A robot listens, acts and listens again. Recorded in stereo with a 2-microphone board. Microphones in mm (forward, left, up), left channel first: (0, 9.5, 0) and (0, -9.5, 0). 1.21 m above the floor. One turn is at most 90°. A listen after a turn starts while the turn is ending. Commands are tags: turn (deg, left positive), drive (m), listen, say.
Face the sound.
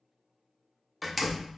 <turn deg="-30"/>
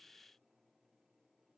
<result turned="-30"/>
<listen/>
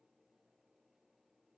<say>I heard a door slam, but can't make it out now. It was about 25° left or 145° right.</say>